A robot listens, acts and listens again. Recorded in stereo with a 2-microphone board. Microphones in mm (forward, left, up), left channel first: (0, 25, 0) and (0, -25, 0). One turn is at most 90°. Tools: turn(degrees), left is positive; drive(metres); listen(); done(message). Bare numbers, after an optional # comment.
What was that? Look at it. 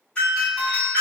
# The doorbell: about 20° left or 160° left.
turn(20)
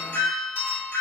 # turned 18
# So it is at 145° left.
turn(90)
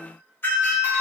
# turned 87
# The doorbell is now 55° left.
turn(55)
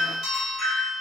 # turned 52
done("Found it: a doorbell, straight ahead.")